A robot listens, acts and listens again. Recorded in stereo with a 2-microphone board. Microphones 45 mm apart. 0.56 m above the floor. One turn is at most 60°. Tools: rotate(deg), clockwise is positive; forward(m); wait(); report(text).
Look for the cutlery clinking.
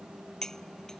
rotate(-30)
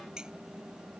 wait()
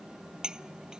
rotate(20)
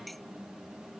wait()
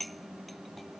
report("Found it: cutlery clinking, straight ahead.")